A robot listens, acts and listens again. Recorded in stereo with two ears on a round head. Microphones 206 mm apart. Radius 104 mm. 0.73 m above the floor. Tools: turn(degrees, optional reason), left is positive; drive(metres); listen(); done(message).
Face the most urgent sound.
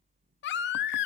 turn(degrees=50, reason="The baby crying: about 50° left or 130° left.")
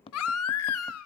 turn(degrees=75, reason="So it is at 75° left.")
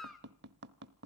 done("Facing the baby crying, 1 to 2 m away.")